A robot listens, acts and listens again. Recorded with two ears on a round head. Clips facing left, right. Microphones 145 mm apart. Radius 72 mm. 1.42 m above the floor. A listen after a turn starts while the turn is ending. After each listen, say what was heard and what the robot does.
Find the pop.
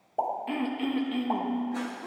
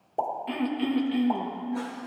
The pop: about 20° right or 160° right. Turn 20° right.
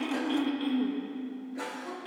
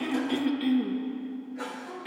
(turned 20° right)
Keep listening.
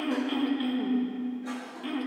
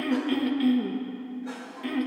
I heard a pop, but can't make it out now. It was about straight ahead or 140° right.